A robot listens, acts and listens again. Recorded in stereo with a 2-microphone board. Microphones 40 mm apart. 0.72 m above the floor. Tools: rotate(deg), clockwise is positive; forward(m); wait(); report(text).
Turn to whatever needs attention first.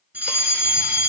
rotate(45)
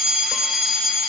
rotate(10)
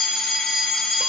report("Found it: a fire alarm, straight ahead, 2 to 4 m away.")